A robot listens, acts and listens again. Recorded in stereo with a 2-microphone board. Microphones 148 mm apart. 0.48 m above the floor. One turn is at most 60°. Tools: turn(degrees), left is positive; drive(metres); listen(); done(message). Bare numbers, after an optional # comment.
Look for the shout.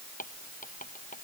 listen()
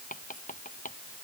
listen()
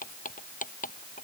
done("I can't make out a shout, only writing.")